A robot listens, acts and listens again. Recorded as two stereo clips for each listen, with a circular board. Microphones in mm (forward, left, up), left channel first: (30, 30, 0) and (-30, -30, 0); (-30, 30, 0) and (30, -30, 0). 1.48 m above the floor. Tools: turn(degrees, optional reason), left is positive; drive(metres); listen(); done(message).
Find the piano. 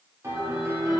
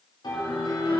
turn(degrees=165, reason="The piano: 165° left.")
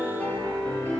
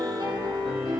turn(degrees=-25, reason="The piano is now 25° right.")
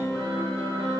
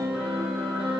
turn(degrees=-15, reason="The piano is now 15° right.")
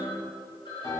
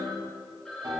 done("Found it: a piano, straight ahead, 2 to 4 m away.")